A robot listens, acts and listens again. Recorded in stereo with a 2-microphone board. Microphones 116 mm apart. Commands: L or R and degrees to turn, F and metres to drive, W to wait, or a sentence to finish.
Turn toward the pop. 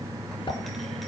L45
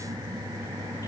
W
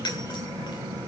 I heard a pop, but can't make it out now. It was about straight ahead or 90° left.